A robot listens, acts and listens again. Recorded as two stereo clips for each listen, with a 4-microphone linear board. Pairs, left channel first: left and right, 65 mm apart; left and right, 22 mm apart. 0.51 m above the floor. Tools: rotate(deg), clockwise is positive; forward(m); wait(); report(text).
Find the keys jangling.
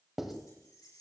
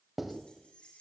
rotate(-90)
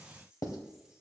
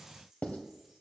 rotate(15)
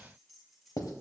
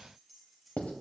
report("Found it: keys jangling, straight ahead, over 4 m away.")